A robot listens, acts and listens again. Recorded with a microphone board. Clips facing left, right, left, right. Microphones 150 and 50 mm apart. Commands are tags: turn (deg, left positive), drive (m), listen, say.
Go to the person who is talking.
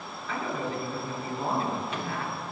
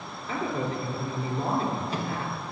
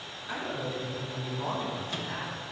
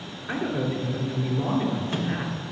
<turn deg="-40"/>
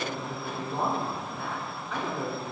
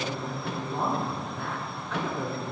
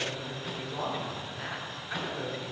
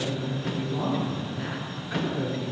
<drive m="1.0"/>
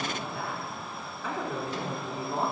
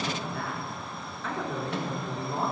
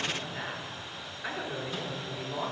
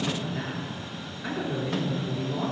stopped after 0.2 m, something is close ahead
<say>Blocked. The man speaking is further on, straight ahead.</say>